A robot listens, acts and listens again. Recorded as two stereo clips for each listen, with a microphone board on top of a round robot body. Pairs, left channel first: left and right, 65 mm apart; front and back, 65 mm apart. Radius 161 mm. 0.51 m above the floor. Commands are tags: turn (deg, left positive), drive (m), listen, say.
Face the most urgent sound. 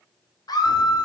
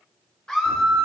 <turn deg="80"/>
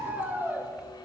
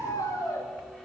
<turn deg="-30"/>
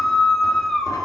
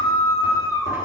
<say>Facing the scream.</say>